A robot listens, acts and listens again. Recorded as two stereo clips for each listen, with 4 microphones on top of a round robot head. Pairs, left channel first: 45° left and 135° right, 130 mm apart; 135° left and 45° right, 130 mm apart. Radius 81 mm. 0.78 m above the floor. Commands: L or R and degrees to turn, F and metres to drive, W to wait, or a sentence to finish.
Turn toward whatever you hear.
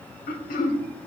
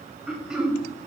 L40
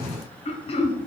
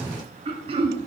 Facing the throat clearing.